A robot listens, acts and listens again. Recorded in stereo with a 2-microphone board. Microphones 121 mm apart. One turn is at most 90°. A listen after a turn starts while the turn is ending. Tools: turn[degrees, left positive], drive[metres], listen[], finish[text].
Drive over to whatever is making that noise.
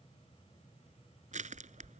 Action: turn[-90]
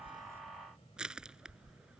Action: drive[1.0]
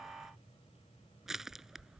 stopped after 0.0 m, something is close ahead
Action: finish[Blocked. The crushing is further on, straight ahead.]